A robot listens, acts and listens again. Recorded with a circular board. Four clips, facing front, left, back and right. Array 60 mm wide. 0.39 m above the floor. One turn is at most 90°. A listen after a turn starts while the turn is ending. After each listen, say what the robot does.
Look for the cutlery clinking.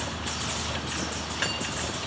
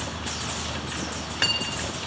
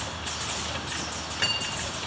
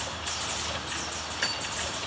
Turn 90° left.
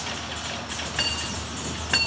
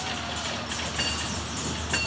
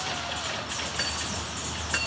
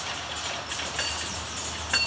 Turn 10° right.
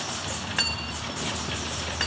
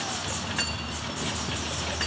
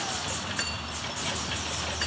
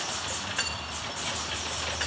Found it: cutlery clinking, straight ahead, 1 to 2 m away.